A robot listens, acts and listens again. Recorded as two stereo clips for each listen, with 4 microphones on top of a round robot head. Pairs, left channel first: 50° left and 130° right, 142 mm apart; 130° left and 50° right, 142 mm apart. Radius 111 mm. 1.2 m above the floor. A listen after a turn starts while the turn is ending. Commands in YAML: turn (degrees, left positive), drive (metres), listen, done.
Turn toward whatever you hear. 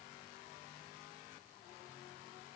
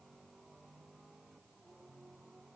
listen: true
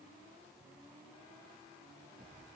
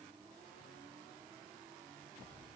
listen: true
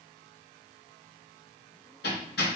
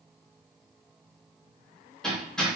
turn: 45
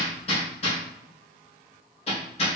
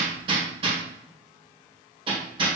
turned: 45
done: "Found it: hammering, straight ahead, 1 to 2 m away."